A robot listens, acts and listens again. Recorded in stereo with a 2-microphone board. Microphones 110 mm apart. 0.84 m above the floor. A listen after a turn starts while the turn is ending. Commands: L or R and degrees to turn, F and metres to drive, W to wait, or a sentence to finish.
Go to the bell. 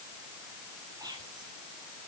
W
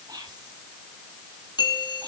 L45
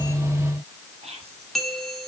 F1.0
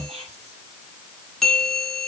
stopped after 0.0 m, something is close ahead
Blocked. The bell is further on, straight ahead.